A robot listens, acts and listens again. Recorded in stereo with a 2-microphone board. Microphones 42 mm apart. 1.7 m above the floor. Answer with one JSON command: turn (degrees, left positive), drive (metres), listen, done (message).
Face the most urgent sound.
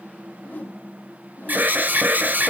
{"turn": -45}
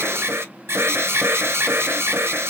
{"turn": -90}
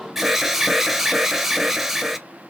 {"turn": -10}
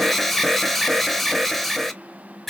{"done": "Found it: an alarm, straight ahead, under 1 m away."}